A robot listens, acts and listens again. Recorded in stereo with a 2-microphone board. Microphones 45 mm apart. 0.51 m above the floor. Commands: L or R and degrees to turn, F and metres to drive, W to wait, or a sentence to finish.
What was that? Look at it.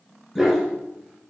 R30
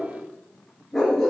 L30
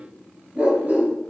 R35
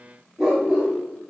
R10
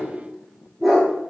Facing the dog barking.